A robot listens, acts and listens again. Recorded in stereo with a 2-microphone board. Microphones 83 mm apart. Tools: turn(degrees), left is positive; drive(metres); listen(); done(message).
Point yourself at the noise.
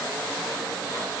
listen()
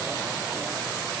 listen()
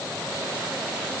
done("I can't make out anything.")